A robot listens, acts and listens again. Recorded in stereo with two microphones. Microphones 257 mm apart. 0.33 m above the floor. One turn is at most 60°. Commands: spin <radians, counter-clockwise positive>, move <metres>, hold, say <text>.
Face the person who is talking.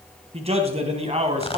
spin -0.44
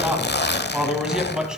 say Found it: a man speaking, straight ahead, 2 to 4 m away.